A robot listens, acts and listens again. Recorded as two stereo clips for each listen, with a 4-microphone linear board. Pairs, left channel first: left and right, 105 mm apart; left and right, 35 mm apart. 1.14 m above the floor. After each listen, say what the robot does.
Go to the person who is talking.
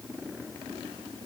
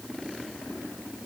Keep listening.
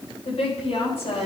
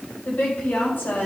Turn 70° left.
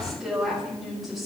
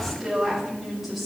Drive 1.0 m forward.
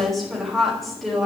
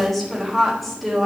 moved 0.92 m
Drive 1.0 m forward.
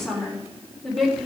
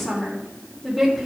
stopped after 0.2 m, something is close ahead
Something is in my way. I am facing the woman speaking but have not reached it.